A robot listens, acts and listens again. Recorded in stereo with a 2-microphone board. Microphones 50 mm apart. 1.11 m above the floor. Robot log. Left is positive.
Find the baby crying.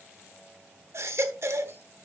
note: The baby crying: about 60° right or 120° right.
cmd yaw -60
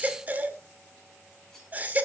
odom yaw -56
note: So it is at 40° right.
cmd yaw -40
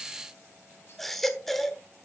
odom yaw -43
end: Found it: a baby crying, straight ahead, 1 to 2 m away.